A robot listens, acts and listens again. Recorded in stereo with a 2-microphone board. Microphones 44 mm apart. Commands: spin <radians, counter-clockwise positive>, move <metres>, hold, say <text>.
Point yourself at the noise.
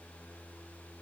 hold
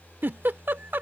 spin -0.87
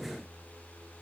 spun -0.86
hold
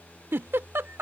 spin -1.31
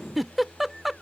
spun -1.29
say Found it: a giggle, straight ahead.